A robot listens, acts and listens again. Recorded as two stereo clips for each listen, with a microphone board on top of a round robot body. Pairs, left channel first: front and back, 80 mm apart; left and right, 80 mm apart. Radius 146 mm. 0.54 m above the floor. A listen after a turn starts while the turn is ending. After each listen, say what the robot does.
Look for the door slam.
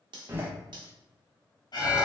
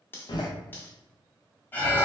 Turn 120° left.
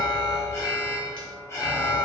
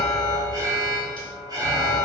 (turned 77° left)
Turn 40° left.
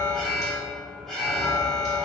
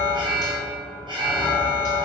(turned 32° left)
Turn 10° left.
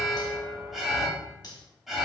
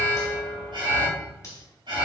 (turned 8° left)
I heard a door slam from this way, but can't make it out now.